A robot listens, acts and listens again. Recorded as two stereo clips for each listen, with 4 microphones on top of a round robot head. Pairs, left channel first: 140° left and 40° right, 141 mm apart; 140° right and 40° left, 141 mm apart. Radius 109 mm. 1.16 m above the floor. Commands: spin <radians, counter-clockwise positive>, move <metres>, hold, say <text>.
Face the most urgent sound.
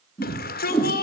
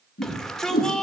spin 2.36
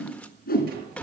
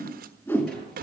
spin 0.96
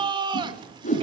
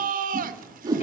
spin 0.26
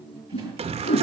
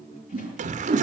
say Found it: a shout, straight ahead, 1 to 2 m away.